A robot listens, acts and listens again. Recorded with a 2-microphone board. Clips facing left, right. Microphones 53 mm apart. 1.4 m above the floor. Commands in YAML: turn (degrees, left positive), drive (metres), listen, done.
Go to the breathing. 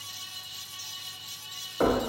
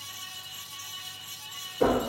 listen: true
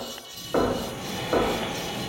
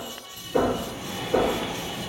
turn: 45
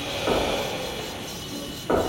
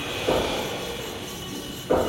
turn: 85
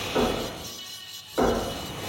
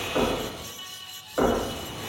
turn: 35
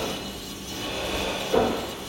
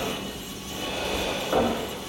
drive: 1.0
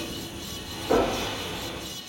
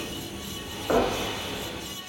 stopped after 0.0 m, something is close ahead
done: "Something is in my way. I am facing the breathing but have not reached it."